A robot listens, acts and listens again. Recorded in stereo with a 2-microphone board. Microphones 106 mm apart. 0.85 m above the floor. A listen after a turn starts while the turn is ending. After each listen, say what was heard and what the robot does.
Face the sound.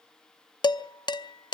The dishes clattering: about 45° left or 135° left. Turn 45° left.
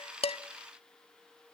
Keep listening.
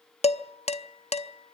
So it is at 90° left. Turn 90° left.
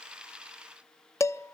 The dishes clattering is now 30° left. Turn 30° left.
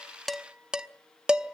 The dishes clattering is now 10° right. Turn 10° right.
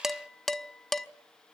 Found it: dishes clattering, straight ahead, under 1 m away.